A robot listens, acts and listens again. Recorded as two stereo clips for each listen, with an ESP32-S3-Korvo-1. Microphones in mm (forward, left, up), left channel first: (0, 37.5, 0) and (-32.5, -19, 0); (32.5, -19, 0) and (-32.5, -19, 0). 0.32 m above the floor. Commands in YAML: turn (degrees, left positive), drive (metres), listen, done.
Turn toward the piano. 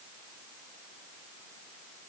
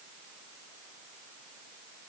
listen: true
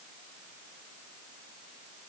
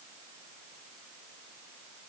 listen: true
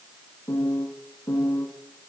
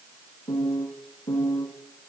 turn: 15
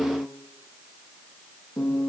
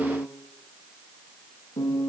done: "Facing the piano."